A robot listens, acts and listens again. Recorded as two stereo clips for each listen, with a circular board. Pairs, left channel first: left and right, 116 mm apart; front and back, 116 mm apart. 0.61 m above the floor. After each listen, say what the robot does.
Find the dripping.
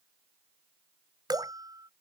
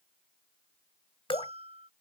Turn 40° right.
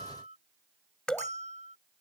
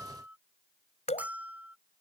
Turn 10° left.
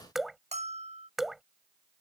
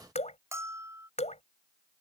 Found it: dripping, straight ahead.